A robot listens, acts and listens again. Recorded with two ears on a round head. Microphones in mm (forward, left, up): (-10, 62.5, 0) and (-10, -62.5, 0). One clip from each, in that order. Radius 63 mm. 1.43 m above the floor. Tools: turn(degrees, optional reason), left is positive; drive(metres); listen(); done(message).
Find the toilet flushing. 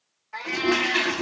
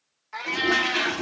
turn(degrees=30)
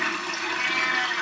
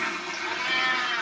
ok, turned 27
turn(degrees=145, reason="So it is at 145° left.")
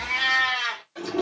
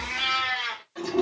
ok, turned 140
done("Facing the toilet flushing.")